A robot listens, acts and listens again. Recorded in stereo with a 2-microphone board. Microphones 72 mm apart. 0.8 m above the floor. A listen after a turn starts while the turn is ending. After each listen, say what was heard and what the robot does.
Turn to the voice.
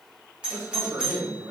The man speaking: about 45° right or 135° right. Turn 45° right.
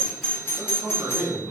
So it is at 80° right. Turn 80° right.
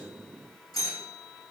Keep listening.
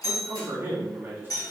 The man speaking is now 30° right. Turn 30° right.
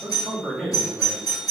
Facing the man speaking.